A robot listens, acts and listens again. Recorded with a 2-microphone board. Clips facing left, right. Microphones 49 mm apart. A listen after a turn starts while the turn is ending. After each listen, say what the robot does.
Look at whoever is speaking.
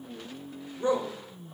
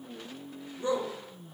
Turn 35° left.
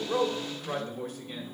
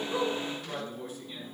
Turn 100° left.
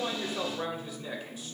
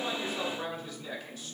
Turn 15° left.
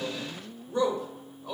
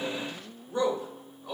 Facing the man speaking, 2 to 4 m away.